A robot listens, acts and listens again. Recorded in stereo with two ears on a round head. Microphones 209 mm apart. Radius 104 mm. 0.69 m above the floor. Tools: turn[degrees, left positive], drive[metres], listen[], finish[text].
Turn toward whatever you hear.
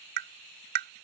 Thought: The tapping: about 45° right or 135° right.
Action: turn[-45]
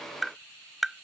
Action: finish[Found it: tapping, straight ahead.]